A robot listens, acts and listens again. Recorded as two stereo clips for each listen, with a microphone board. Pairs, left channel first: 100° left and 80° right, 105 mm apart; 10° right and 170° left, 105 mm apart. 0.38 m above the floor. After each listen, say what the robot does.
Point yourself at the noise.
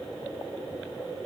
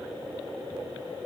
Keep listening.
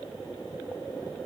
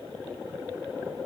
Keep listening.
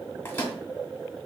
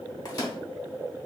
Turn 35° left.
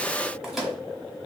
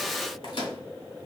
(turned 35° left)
Facing the microwave, 1 to 2 m away.